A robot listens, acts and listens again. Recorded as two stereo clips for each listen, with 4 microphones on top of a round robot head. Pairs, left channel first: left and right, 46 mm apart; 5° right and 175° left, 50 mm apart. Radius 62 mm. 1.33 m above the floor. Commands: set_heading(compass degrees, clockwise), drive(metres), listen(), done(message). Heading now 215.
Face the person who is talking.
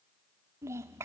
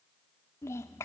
set_heading(265)
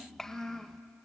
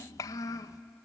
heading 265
done("Found it: a child speaking, straight ahead, under 1 m away.")